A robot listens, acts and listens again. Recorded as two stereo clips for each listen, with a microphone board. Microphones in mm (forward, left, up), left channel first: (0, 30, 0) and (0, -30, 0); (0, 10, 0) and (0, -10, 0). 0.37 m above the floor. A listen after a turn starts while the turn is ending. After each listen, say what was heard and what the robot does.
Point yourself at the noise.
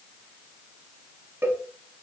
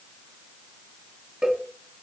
The cowbell: about 50° right or 130° right. Turn 50° right.
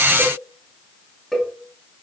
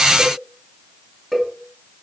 Facing the cowbell, under 1 m away.